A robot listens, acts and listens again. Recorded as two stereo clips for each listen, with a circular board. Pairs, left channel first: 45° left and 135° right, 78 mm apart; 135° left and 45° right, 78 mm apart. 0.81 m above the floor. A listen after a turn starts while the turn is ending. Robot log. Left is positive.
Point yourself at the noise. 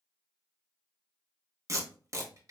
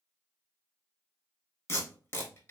note: The tape being pulled: 175° right.
cmd yaw -175
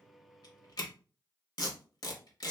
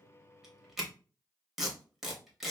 note: The tape being pulled is now 40° left.
cmd yaw +40
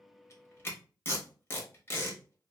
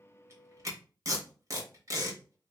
note: The tape being pulled is now 10° right.
cmd yaw -10
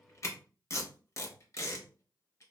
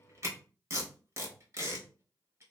end: Found it: tape being pulled, straight ahead.